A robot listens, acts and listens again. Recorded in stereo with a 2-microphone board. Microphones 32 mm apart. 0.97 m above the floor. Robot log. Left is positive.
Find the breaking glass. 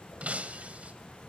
note: The breaking glass: about 45° right or 135° right.
cmd yaw -45
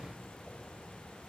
cmd idle
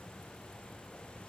end: I heard breaking glass, but can't make it out now. It was about straight ahead or 90° right.